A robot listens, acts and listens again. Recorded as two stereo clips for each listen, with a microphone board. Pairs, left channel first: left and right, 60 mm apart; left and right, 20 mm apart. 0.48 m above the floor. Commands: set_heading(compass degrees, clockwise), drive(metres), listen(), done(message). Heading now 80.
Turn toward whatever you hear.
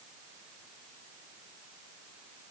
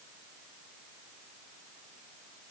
listen()
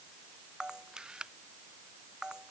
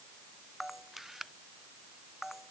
set_heading(110)
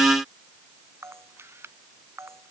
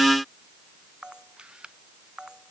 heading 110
set_heading(245)
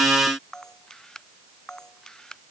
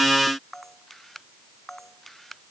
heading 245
set_heading(235)
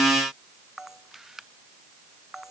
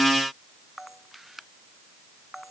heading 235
done("Facing the camera shutter.")